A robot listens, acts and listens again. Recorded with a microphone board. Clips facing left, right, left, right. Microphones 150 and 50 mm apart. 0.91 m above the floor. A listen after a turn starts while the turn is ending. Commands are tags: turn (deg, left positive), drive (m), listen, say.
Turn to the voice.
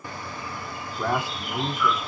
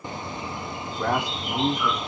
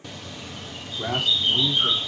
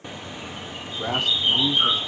<turn deg="30"/>
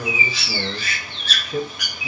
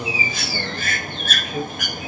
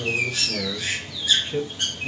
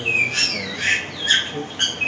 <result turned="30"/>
<turn deg="140"/>
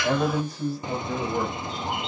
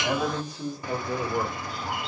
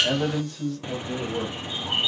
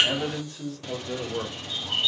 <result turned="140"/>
<turn deg="-20"/>
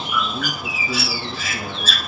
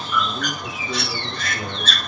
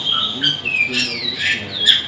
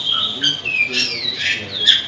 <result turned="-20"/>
<say>Facing the man speaking, over 4 m away.</say>